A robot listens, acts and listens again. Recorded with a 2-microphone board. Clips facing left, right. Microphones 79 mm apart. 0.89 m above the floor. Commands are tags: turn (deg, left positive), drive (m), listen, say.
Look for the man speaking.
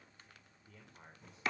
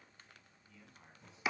<turn deg="55"/>
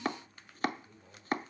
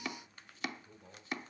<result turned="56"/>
<turn deg="-10"/>
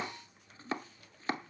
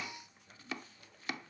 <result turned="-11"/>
<listen/>
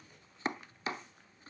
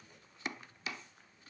<listen/>
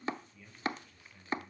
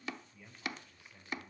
<turn deg="-20"/>
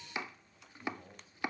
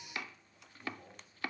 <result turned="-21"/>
<say>Found it: a man speaking, straight ahead, over 4 m away.</say>